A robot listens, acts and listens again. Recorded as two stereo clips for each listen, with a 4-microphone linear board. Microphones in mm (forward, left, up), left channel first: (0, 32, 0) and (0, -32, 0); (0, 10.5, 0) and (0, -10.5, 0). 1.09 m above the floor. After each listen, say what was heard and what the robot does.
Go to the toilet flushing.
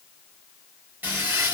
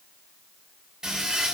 The toilet flushing: about 30° right or 150° right. Turn 30° right.
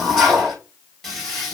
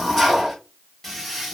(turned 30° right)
Drive 1.0 m forward.
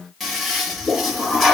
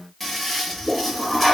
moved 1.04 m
Drive 1.0 m forward.
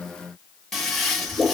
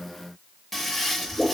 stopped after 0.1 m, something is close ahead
I am next to the toilet flushing.